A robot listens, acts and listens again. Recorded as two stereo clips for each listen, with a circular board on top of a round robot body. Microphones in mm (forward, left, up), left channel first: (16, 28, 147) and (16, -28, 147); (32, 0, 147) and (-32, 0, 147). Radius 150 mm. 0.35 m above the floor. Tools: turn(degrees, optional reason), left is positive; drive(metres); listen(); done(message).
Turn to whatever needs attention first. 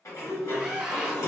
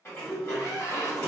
done("Found it: a scream, straight ahead, 1 to 2 m away.")